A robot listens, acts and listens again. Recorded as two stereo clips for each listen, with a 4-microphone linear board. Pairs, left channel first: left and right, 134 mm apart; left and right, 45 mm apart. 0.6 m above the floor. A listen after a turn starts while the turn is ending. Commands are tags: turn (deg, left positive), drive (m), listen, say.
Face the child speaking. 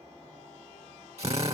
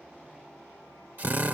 <listen/>
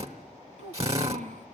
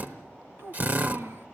<turn deg="-65"/>
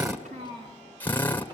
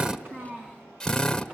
<turn deg="-40"/>
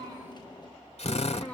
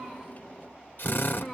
<turn deg="10"/>
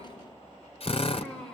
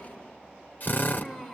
<say>Found it: a child speaking, straight ahead, over 4 m away.</say>